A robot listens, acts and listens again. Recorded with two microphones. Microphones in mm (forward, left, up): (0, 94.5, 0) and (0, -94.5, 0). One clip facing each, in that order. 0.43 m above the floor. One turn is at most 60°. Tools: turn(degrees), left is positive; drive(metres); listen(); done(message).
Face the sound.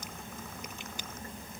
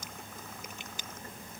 listen()
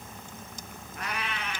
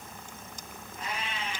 turn(degrees=60)
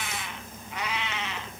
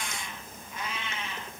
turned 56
turn(degrees=60)
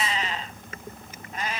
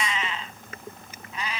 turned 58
turn(degrees=45)
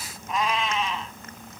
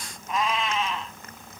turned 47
done("Facing the cat meowing.")